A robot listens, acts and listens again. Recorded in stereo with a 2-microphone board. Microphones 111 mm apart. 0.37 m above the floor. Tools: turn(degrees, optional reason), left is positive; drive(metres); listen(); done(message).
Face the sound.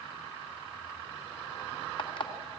turn(degrees=55, reason="The alarm clock: about 55° left or 125° left.")
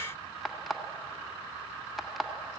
done("Facing the alarm clock.")